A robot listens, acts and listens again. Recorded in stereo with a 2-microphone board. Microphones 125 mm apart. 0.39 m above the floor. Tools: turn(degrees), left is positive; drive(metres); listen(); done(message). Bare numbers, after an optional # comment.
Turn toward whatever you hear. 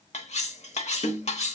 # The cutlery clinking: about 60° left or 120° left.
turn(60)
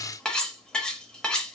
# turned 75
done("Facing the cutlery clinking, under 1 m away.")